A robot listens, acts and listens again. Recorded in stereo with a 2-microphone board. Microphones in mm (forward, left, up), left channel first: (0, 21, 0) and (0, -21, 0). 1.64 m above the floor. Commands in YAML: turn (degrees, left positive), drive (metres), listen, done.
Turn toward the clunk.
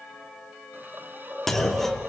turn: 30
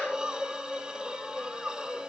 listen: true
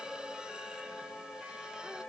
done: "I heard a clunk, but can't make it out now. It was about 25° right or 145° left."